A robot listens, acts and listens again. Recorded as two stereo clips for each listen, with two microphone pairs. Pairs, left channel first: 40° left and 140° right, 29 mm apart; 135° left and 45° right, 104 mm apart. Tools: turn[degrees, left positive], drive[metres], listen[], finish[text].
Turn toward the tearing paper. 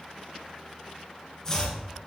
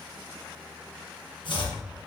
Action: listen[]
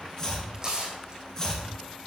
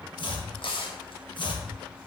Thought: The tearing paper: 160° left.
Action: turn[160]
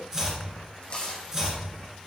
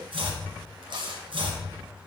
Thought: The tearing paper is now 15° right.
Action: turn[-15]
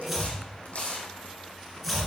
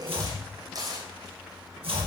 Action: finish[Facing the tearing paper, 2 to 4 m away.]